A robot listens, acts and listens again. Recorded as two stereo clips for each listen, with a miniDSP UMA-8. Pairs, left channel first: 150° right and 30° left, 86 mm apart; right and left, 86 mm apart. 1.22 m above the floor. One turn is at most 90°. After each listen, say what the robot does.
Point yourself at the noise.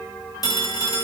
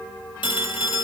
Turn 90° right.
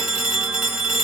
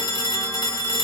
Turn 50° right.
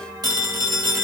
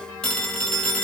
Found it: a phone ringing, straight ahead.